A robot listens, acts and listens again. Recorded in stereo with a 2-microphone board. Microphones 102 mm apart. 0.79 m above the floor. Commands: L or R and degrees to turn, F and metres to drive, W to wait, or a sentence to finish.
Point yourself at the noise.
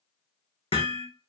L65
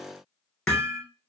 L10
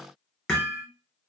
Found it: hammering, straight ahead, 1 to 2 m away.